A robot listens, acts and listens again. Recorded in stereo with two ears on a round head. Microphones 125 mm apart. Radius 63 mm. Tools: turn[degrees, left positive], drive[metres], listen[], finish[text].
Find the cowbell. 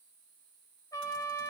Action: listen[]
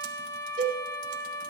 Thought: The cowbell: about 55° right or 125° right.
Action: turn[-55]
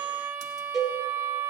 Action: finish[Facing the cowbell, 2 to 4 m away.]